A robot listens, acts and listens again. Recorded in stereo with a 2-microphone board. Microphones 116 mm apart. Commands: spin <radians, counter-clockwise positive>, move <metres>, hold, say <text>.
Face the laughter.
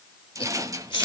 spin 0.79
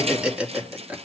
spin -0.17
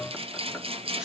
hold
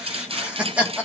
spin -0.17
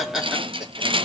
say Found it: laughter, straight ahead.